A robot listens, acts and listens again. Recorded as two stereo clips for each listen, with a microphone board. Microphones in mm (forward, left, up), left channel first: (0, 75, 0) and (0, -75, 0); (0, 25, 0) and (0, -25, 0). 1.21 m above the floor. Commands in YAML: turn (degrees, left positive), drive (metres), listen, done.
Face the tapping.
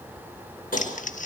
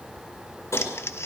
turn: 90
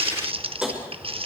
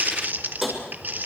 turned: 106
done: "Found it: tapping, straight ahead."